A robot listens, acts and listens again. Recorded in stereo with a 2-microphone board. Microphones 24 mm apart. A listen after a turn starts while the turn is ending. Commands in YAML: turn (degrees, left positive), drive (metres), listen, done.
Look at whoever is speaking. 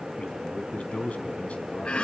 turn: 60
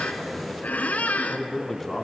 turn: 10
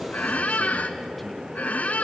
listen: true
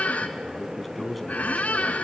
done: "Found it: a man speaking, straight ahead, 2 to 4 m away."